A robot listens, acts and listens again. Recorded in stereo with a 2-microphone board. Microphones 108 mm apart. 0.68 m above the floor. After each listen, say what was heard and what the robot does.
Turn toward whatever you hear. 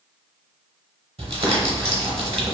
The crumpling: about 65° right or 115° right. Turn 65° right.
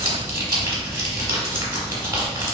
So it is at 35° right. Turn 35° right.
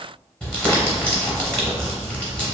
The crumpling is now 10° left. Turn 10° left.
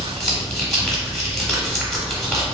Facing the crumpling.